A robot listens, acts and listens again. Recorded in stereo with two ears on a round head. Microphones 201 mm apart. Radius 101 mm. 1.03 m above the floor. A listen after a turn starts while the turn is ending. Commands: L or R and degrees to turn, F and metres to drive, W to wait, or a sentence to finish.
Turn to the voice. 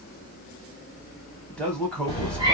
L30
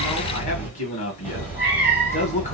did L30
L145
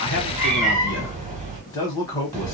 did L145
L20
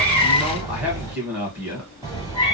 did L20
Found it: a man speaking, straight ahead, 1 to 2 m away.